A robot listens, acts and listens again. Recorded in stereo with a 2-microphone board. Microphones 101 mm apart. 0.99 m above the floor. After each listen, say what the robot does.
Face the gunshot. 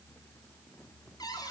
Keep listening.
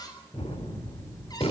Turn 90° left.
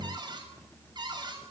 Facing where the gunshot came from. I can't hear it now.